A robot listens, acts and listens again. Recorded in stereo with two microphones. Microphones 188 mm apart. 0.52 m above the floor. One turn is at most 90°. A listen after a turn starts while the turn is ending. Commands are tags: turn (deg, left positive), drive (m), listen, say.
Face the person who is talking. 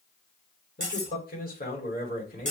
<turn deg="50"/>
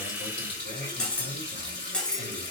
<listen/>
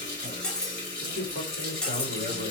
<turn deg="80"/>
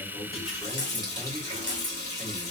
<listen/>
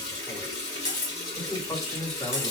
<turn deg="10"/>
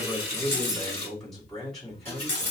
<say>Facing the man speaking.</say>